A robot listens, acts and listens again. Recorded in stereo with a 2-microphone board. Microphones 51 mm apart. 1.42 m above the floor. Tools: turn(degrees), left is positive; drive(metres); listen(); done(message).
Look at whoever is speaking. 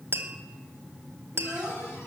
turn(degrees=-15)
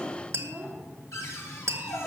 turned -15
turn(degrees=-150)
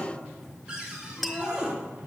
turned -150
listen()
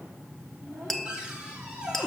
turn(degrees=-30)
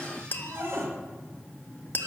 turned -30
listen()
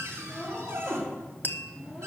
turn(degrees=10)
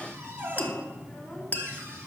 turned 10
done("Found it: a child speaking, straight ahead.")